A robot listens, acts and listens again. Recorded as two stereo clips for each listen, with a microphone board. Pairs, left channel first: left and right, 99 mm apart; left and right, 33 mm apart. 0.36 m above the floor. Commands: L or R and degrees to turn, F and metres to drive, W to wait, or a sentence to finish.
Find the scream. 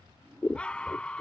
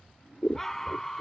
L30
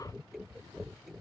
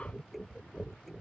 W
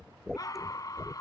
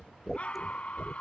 L140
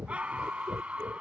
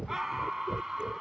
R15
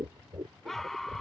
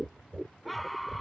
Facing the scream.